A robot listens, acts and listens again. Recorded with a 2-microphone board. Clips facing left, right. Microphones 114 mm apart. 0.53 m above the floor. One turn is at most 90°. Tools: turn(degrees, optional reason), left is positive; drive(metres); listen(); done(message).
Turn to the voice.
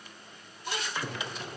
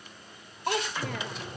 turn(degrees=-70, reason="The child speaking: about 70° right or 110° right.")
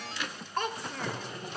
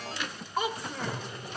done("Found it: a child speaking, straight ahead, under 1 m away.")